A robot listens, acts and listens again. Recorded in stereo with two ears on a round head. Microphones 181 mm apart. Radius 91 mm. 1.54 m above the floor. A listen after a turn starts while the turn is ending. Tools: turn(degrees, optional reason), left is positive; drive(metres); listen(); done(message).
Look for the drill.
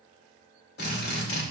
turn(degrees=50, reason="The drill: about 50° left or 130° left.")
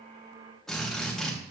done("Facing the drill, 2 to 4 m away.")